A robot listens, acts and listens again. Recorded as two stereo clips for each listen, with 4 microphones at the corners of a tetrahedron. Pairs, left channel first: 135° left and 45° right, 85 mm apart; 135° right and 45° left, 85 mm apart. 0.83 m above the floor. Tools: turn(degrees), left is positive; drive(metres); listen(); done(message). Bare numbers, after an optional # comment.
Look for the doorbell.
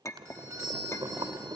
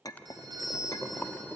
# The doorbell: 10° left.
turn(10)
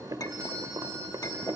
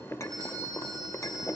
listen()
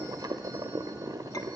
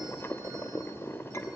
listen()
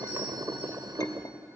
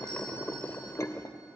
done("Facing where the doorbell came from. I can't hear it now.")